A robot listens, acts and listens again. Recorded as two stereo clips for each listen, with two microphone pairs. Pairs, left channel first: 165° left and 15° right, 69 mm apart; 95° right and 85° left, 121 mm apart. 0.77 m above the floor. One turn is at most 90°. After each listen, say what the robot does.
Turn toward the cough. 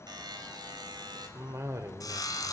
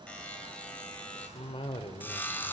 Turn 55° right.
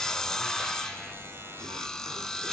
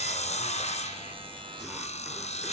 Keep listening.
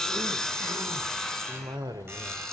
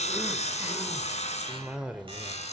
Facing the cough.